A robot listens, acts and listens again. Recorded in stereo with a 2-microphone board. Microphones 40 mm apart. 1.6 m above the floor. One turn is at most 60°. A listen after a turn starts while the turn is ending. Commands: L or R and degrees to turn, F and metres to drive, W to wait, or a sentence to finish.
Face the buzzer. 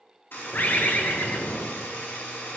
L60
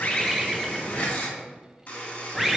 L50
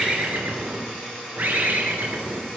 L10
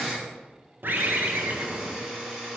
Found it: a buzzer, straight ahead.